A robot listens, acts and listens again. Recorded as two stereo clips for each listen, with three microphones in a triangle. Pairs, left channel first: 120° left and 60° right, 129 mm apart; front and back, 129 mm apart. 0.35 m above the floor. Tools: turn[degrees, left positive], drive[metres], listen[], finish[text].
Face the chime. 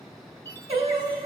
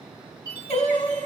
Thought: The chime: 55° left.
Action: turn[55]
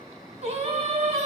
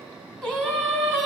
Action: listen[]
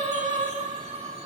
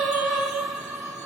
Action: listen[]
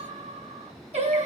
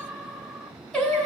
Action: finish[Facing where the chime came from. I can't hear it now.]